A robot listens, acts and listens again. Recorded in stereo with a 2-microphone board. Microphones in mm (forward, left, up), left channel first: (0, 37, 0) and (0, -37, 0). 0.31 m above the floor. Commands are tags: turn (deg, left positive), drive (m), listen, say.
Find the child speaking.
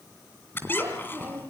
<turn deg="-20"/>
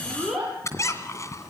<turn deg="-30"/>
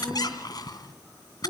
<listen/>
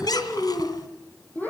<turn deg="25"/>
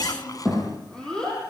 <turn deg="10"/>
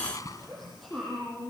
<say>Facing the child speaking, over 4 m away.</say>